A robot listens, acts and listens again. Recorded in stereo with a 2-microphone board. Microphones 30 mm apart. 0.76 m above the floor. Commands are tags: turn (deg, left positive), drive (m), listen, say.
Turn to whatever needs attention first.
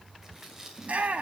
<turn deg="-50"/>
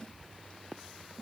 <listen/>
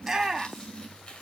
<turn deg="-15"/>
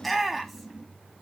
<say>Found it: a shout, straight ahead.</say>